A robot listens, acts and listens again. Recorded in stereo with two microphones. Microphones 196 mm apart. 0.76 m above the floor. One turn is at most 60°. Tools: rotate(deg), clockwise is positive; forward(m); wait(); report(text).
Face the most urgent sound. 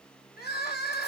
rotate(-55)
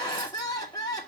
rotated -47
rotate(-25)
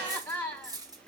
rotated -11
rotate(-15)
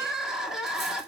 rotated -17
report("Facing the crying, 2 to 4 m away.")